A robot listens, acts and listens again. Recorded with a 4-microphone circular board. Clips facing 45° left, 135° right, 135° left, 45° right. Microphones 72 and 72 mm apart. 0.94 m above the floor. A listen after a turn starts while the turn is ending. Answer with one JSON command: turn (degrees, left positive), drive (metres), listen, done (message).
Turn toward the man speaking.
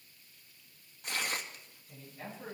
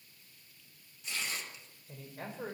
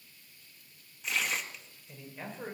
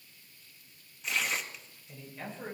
{"turn": -145}
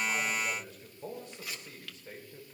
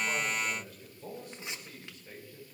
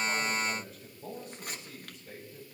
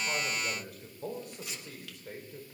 {"turn": -15}
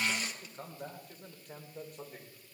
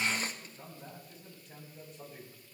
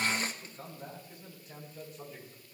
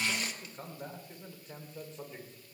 {"turn": 15}
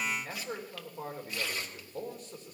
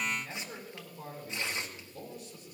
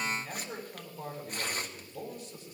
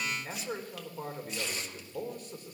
{"done": "Found it: a man speaking, straight ahead, 2 to 4 m away."}